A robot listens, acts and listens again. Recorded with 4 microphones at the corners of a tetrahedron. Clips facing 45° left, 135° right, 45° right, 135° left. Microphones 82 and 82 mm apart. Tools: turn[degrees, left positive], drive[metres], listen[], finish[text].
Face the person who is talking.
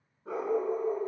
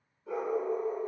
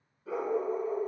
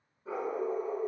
Action: listen[]
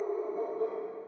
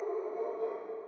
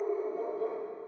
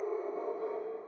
Action: listen[]
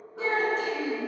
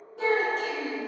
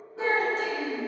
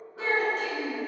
Thought: The child speaking: 110° right.
Action: turn[-110]
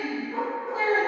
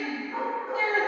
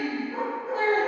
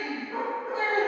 Action: finish[Found it: a child speaking, straight ahead.]